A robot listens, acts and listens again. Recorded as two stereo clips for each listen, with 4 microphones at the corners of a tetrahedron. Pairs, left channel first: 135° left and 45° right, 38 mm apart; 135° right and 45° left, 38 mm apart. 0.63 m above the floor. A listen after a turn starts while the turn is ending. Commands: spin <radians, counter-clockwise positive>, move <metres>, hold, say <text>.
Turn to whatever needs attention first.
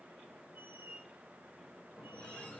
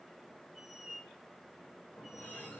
hold
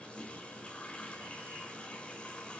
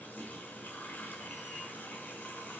hold
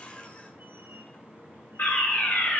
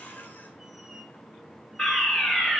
spin 2.71
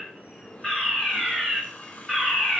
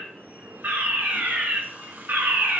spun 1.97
spin 0.79
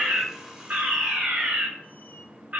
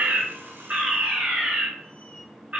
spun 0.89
say Facing the fire alarm, 2 to 4 m away.